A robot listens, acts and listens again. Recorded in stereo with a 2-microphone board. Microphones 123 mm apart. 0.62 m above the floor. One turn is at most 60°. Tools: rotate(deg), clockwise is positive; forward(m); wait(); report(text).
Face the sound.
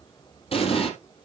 rotate(-55)
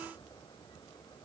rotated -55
wait()
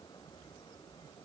report("I heard an explosion, but can't make it out now. It was about straight ahead or 70° left.")